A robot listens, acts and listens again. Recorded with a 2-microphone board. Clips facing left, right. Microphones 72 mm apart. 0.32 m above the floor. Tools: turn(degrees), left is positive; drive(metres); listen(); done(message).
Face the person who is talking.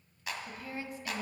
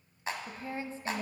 turn(degrees=-30)
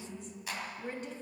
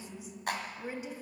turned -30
turn(degrees=-10)
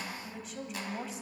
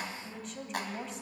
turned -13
done("Facing the woman speaking.")